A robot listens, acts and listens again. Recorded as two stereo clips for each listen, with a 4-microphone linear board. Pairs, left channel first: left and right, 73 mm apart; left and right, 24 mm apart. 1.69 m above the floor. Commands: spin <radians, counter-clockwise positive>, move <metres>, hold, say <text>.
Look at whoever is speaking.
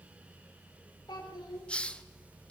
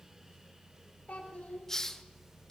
spin 1.57
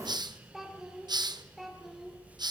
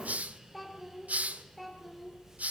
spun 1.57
say Found it: a child speaking, straight ahead.